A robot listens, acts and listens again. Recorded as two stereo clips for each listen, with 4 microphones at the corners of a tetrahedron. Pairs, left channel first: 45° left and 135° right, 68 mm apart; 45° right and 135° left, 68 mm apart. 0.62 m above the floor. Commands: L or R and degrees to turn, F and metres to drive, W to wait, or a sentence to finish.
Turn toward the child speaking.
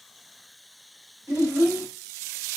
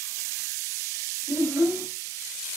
L180
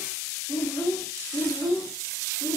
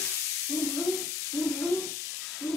L40
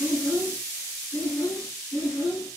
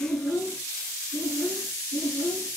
Facing the child speaking.